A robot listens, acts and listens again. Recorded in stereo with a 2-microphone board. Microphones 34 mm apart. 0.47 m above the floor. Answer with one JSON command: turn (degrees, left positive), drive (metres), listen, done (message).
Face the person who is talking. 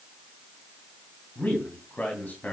{"turn": 55}
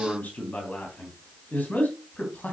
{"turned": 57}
{"turn": 60}
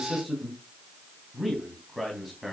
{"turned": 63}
{"done": "Found it: a man speaking, straight ahead, 2 to 4 m away."}